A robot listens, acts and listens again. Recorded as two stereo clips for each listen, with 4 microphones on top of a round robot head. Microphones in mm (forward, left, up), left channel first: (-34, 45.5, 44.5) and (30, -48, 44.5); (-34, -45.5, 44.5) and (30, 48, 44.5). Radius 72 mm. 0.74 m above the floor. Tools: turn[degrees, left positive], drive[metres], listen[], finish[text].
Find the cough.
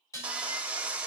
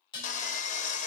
Action: listen[]
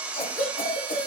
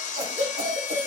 Thought: The cough: 95° left.
Action: turn[95]
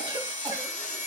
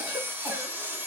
Action: listen[]
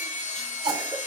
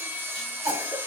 Action: finish[Found it: a cough, straight ahead.]